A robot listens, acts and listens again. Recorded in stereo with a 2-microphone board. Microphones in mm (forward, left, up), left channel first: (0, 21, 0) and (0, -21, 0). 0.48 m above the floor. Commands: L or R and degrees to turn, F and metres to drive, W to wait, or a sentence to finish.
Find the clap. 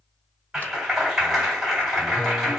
R30
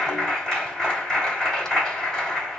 L15
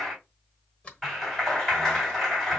Found it: a clap, straight ahead, 2 to 4 m away.